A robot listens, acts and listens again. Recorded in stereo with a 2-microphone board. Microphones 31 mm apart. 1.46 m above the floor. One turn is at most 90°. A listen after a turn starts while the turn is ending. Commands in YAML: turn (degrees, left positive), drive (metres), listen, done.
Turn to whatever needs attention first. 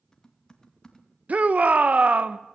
turn: -50
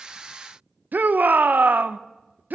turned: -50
turn: -75
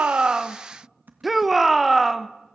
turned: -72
done: "Facing the shout."